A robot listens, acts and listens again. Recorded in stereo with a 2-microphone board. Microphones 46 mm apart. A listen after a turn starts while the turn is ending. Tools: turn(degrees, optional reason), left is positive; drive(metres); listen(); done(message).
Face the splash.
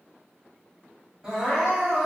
listen()
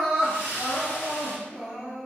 turn(degrees=90)
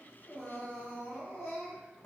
done("I heard a splash from this way, but can't make it out now.")